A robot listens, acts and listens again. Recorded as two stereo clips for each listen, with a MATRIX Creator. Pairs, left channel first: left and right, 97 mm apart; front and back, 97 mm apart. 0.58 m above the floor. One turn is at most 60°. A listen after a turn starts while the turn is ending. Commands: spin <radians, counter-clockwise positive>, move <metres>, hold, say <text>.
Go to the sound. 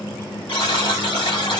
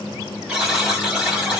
spin 1.05
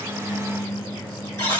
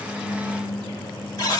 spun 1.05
spin 0.70
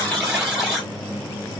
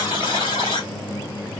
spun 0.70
move 1.0
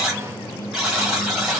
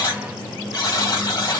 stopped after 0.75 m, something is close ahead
say I am next to the buzzer.